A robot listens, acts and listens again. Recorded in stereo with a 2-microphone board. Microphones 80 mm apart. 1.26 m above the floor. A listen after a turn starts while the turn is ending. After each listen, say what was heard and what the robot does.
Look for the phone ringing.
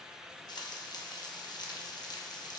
Keep listening.
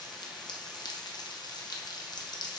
Keep listening.
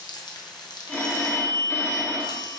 The phone ringing: about 25° left or 155° left. Turn 25° left.
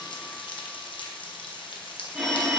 Facing the phone ringing.